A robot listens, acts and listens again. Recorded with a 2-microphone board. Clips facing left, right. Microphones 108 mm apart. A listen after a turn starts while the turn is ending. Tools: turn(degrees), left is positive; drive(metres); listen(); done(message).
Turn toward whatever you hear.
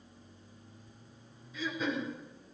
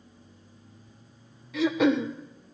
turn(degrees=-75)
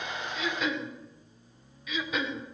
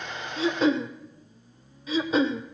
turn(degrees=-30)
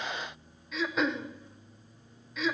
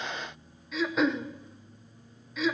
done("Found it: throat clearing, straight ahead, under 1 m away.")